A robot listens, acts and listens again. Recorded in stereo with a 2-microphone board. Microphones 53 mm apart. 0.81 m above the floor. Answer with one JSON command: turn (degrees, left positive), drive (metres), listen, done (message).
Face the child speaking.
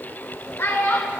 {"turn": 50}
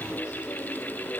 {"listen": true}
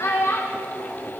{"turn": 60}
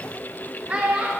{"turn": -30}
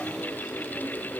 {"listen": true}
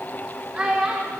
{"turn": -20}
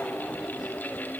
{"listen": true}
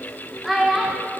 {"done": "Facing the child speaking."}